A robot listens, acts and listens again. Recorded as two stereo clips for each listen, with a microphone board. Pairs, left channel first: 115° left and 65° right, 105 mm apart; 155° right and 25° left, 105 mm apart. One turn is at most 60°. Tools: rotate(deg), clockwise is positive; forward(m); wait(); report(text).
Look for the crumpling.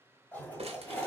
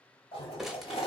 rotate(60)
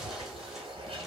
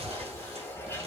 wait()
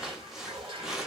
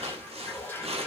rotate(-20)
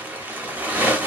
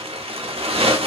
report("Found it: crumpling, straight ahead.")